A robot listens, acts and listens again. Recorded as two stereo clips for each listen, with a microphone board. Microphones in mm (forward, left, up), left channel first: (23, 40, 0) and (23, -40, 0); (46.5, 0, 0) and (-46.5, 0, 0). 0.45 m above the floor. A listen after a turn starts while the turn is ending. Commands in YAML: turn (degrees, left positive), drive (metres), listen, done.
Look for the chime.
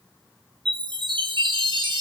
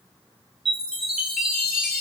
turn: -95
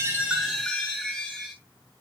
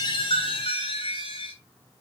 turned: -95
done: "Facing the chime."